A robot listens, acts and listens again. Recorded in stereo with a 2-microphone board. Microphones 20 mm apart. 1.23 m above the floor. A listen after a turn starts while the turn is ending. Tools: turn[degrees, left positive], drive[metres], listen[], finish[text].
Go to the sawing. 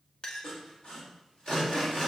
Thought: The sawing: about 50° left or 130° left.
Action: turn[50]
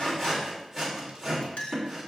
Action: drive[1.0]
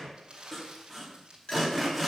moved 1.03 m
Action: drive[1.0]
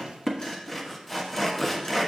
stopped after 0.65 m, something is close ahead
Thought: The sawing is now 10° left.
Action: turn[10]
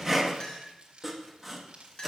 Action: finish[Arrived at the sawing, straight ahead.]